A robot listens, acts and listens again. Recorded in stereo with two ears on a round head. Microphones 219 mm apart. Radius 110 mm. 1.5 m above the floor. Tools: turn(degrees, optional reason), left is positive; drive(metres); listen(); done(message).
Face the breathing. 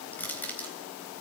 listen()
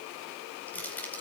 listen()
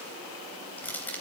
done("I can't make out breathing to turn to.")